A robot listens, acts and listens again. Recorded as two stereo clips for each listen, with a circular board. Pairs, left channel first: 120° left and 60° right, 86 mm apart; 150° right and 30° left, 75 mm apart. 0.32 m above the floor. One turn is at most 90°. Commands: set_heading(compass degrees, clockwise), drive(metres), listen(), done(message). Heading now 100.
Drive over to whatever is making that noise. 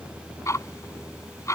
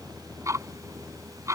set_heading(30)
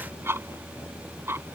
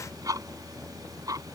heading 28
drive(1.0)
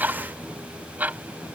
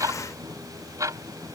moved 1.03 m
drive(1.0)
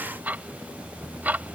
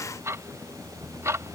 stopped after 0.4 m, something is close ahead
done("Arrived at the ticking, straight ahead.")